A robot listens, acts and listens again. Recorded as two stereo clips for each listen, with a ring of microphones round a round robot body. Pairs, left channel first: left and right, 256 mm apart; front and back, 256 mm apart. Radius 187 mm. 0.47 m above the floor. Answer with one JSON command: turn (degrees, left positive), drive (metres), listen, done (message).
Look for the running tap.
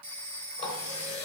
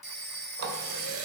{"turn": 160}
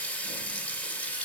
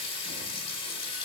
{"done": "Facing the running tap."}